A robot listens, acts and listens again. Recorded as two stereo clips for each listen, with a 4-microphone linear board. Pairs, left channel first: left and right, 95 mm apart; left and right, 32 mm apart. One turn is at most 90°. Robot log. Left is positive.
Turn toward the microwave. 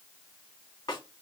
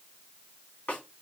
cmd idle
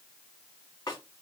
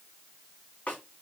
cmd idle
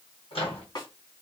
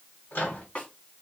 cmd yaw +90
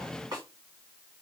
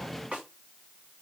cmd idle
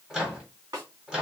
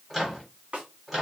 end: Found it: a microwave, straight ahead.